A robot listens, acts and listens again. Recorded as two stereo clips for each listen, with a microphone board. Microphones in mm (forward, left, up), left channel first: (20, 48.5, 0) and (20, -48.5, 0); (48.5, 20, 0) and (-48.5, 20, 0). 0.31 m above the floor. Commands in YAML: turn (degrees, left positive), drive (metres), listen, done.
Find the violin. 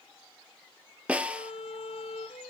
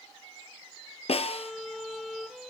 turn: 90
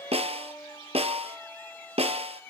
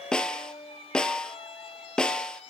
turn: 20
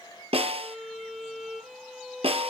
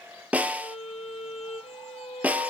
done: "Facing the violin, 2 to 4 m away."